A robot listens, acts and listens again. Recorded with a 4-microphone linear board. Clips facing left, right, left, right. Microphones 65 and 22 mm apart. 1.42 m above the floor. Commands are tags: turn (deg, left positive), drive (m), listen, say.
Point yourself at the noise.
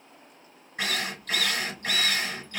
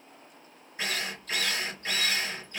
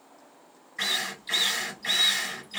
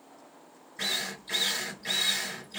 <turn deg="70"/>
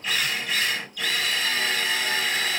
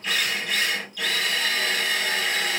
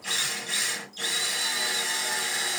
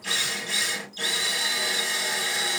<say>Facing the drill.</say>